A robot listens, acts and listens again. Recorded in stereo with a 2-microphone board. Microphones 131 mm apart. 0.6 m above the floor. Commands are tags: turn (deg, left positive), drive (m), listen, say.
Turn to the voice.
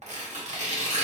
<listen/>
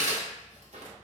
<listen/>
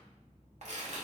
<say>I can't make out anyone speaking to turn to.</say>